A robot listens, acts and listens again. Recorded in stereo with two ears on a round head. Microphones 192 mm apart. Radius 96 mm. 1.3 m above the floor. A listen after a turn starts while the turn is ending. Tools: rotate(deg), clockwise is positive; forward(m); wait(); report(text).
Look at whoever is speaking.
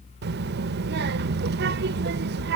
rotate(50)
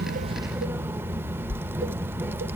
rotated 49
rotate(10)
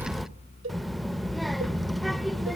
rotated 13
report("Facing the child speaking.")